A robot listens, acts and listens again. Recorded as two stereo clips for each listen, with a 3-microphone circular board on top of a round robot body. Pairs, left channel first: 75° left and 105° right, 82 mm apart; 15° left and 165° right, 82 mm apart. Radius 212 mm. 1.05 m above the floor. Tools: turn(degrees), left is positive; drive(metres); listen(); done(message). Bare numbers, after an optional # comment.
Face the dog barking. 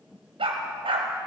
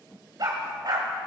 # The dog barking: 120° right.
turn(-120)
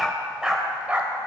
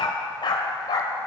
# The dog barking is now 30° right.
turn(-30)
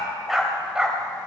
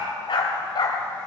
# The dog barking is now 25° right.
turn(-25)
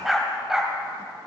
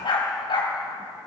# The dog barking is now 20° right.
turn(-20)
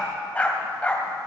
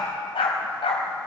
done("Facing the dog barking.")